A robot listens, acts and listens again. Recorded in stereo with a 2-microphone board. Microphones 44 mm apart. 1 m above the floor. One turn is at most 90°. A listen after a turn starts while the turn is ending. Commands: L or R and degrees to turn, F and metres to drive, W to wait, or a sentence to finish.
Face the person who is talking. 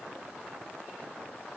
W
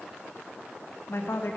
L65
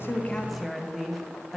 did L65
Facing the woman speaking.